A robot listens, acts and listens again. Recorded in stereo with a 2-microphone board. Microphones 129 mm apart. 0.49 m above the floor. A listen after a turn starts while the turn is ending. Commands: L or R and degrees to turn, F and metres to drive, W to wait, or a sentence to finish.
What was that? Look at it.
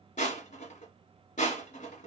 L75
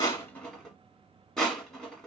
Found it: crushing, straight ahead, 1 to 2 m away.